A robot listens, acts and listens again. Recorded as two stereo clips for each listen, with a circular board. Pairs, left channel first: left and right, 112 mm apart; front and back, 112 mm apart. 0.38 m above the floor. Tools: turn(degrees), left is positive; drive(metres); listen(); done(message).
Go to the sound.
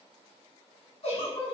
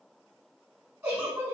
turn(degrees=115)
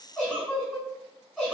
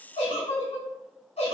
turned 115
turn(degrees=10)
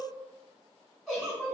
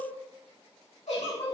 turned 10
drive(metres=1.0)
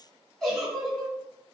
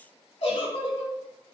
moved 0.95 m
drive(metres=1.0)
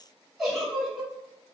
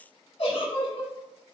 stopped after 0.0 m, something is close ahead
done("Arrived at the giggle, straight ahead.")